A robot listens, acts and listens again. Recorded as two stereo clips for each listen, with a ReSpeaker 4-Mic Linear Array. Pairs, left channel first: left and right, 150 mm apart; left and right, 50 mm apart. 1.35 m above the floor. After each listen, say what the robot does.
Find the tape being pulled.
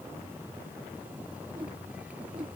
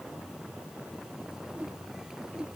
Keep listening.
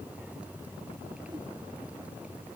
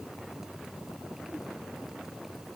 Keep listening.
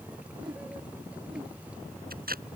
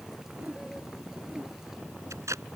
Turn 90° right.
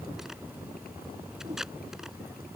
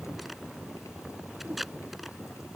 Found it: tape being pulled, straight ahead.